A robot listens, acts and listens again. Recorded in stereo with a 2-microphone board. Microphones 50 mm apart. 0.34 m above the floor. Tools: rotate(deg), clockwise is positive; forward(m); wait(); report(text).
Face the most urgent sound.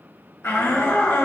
rotate(-65)
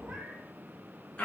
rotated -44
rotate(-25)
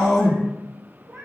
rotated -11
rotate(-15)
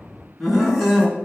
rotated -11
report("Facing the shout.")